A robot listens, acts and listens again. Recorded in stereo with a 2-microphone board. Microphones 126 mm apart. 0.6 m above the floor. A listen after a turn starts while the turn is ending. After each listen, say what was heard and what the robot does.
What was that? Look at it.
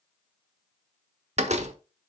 The door slam: about 60° right or 120° right. Turn 60° right.
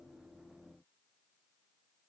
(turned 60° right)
Keep listening.
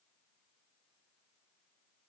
I heard a door slam, but can't make it out now. It was about straight ahead or 60° right.